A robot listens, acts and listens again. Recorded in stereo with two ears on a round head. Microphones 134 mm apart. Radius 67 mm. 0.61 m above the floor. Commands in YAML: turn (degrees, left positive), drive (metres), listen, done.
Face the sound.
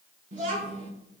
turn: -55
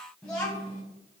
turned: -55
turn: 10
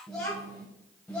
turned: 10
turn: 10
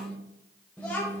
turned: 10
turn: 15
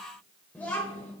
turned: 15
turn: 15
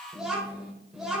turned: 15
done: "Facing the child speaking."